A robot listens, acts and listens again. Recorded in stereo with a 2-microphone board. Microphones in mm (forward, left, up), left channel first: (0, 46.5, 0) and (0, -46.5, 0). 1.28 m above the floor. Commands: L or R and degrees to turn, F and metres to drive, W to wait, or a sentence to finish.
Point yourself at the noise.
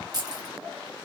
R45
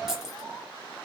Found it: keys jangling, straight ahead.